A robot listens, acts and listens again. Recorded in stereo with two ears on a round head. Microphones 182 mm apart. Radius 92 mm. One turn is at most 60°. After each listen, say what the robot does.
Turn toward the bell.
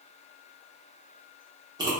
Keep listening.
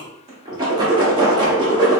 Keep listening.
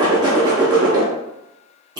I can't make out a bell, only a whoosh.